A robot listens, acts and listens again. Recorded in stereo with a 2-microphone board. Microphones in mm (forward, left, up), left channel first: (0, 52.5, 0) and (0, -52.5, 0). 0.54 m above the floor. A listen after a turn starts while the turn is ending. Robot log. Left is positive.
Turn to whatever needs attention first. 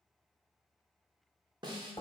cmd idle
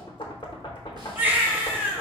note: The baby crying: about 15° right or 165° right.
cmd yaw -15
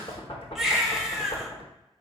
end: Facing the baby crying, under 1 m away.